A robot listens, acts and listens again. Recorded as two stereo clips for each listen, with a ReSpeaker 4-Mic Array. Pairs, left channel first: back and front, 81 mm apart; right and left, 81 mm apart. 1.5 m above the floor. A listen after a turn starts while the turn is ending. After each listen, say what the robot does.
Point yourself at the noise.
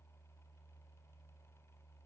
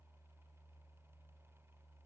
Keep listening.
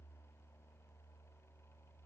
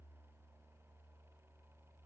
Keep listening.
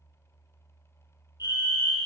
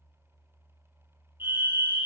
Turn 150° left.
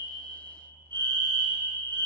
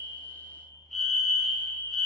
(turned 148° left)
Facing the fire alarm.